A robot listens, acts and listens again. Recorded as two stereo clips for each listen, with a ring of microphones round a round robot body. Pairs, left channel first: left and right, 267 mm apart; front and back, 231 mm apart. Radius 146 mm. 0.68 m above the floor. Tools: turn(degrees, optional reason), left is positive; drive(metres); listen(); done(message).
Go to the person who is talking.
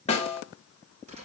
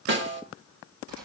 listen()
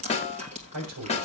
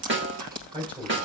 turn(degrees=-110, reason="The man speaking: 110° right.")
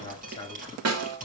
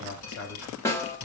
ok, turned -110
turn(degrees=20, reason="The man speaking is now 20° left.")
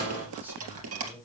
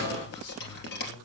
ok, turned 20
drive(metres=1.0)
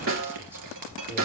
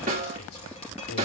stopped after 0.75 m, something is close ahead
listen()
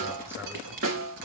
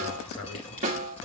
turn(degrees=-10, reason="The man speaking is now 10° right.")
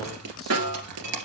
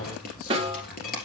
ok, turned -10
listen()
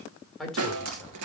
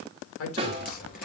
done("Something is in my way. I am facing the man speaking but have not reached it.")